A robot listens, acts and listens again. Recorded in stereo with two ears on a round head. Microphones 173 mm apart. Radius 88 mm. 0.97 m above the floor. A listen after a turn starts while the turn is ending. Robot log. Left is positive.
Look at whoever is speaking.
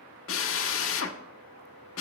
cmd idle
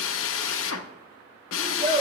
note: The child speaking: about 35° right or 145° right.
cmd yaw -35
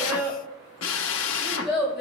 end: Facing the child speaking.